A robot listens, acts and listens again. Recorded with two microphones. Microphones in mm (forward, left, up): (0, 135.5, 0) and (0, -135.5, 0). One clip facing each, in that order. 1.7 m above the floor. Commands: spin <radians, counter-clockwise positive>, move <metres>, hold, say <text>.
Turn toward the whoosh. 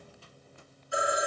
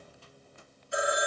hold
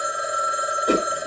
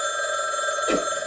spin 0.96
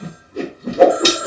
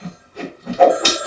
spin 0.96
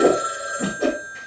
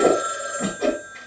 say Found it: a whoosh, straight ahead.